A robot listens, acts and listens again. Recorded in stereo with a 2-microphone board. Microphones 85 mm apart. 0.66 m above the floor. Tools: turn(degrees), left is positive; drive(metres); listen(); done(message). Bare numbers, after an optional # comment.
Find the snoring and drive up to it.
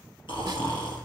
# The snoring: about 70° left or 110° left.
turn(70)
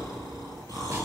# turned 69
# So it is at 40° left.
turn(40)
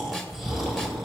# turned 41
drive(1.0)
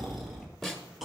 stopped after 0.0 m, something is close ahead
done("Blocked. The snoring is further on, straight ahead.")